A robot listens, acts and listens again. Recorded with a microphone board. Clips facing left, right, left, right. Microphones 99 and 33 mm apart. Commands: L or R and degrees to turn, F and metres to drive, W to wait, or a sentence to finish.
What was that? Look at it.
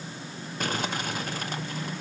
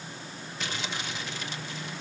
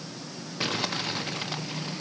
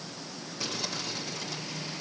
L45
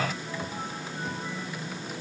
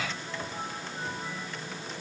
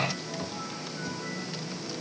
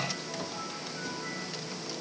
W
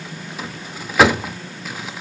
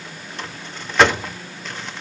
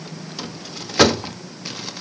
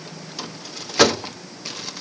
Facing the crumpling.